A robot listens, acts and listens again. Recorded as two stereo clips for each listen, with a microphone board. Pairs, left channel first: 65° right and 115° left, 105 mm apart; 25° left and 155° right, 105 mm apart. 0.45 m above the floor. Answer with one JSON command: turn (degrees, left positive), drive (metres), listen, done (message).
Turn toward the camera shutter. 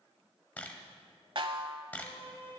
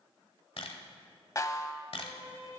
{"done": "Found it: a camera shutter, straight ahead, 1 to 2 m away."}